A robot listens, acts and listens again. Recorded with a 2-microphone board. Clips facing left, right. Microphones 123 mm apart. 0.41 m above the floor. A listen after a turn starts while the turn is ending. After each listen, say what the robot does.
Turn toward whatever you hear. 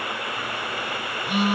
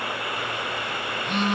Turn 30° left.
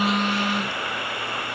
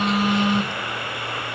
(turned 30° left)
Turn 20° right.
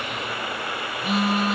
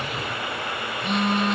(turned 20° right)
Facing the phone buzzing, under 1 m away.